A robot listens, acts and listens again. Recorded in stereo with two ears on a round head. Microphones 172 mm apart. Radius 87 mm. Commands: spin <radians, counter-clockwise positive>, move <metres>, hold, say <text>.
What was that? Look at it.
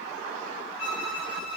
spin 1.31
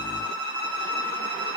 spin 0.17
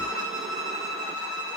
say Facing the violin, over 4 m away.